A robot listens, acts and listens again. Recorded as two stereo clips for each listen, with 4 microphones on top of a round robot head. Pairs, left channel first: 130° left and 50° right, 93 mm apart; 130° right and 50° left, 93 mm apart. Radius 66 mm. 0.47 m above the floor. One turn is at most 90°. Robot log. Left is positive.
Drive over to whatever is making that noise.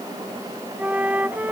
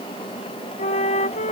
note: The flute: 125° right.
cmd yaw -90
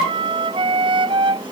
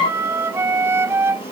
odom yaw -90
note: The flute is now 15° right.
cmd yaw -15
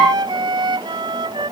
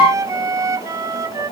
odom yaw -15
cmd fwd 1.0
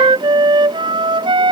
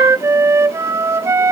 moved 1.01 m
note: The flute is now 10° right.
cmd yaw -10
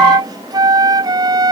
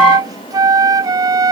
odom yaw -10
cmd fwd 1.0
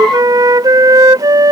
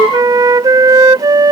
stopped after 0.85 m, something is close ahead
end: Arrived at the flute, straight ahead.